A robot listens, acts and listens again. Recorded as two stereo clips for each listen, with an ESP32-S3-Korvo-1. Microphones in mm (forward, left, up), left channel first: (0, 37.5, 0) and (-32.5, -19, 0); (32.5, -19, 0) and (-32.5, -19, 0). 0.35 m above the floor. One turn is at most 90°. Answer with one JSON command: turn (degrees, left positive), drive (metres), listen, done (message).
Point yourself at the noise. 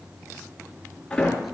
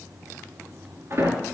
{"turn": 90}
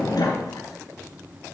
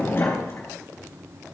{"turn": 55}
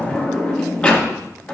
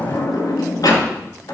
{"turn": -10}
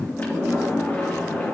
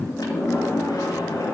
{"done": "Found it: a sliding door, straight ahead, 2 to 4 m away."}